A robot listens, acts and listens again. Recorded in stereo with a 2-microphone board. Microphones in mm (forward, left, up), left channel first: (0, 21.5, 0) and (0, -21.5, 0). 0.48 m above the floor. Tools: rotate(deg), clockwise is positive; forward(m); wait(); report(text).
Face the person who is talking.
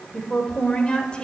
rotate(-25)
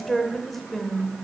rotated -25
report("Facing the woman speaking, 1 to 2 m away.")